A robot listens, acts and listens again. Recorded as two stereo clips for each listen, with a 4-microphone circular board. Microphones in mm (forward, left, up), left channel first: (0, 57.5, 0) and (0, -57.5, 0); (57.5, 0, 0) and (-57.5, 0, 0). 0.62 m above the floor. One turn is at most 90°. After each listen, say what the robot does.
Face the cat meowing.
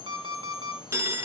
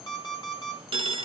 Keep listening.
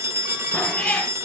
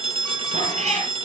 Turn 90° left.
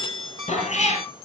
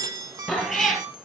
Turn 90° left.
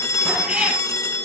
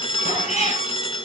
Found it: a cat meowing, straight ahead.